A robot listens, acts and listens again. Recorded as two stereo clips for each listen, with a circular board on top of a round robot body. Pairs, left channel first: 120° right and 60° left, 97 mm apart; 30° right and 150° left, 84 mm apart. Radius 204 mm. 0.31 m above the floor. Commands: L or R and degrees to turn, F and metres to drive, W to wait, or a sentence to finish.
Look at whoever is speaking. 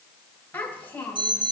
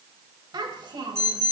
L170
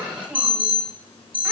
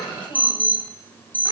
R20
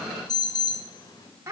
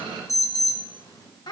Found it: a child speaking, straight ahead, 2 to 4 m away.